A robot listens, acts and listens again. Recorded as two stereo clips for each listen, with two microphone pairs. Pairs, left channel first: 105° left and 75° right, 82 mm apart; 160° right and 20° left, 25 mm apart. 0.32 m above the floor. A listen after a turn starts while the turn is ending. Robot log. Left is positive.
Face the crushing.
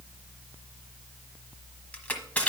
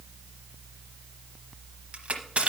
note: The crushing: 35° left.
cmd yaw +35
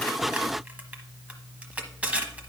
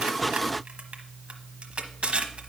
end: Found it: crushing, straight ahead.